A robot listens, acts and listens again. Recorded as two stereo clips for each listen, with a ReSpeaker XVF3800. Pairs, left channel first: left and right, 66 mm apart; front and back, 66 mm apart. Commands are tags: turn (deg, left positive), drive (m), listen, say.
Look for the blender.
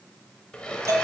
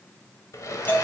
<turn deg="15"/>
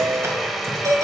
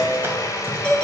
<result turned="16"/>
<say>Facing the blender.</say>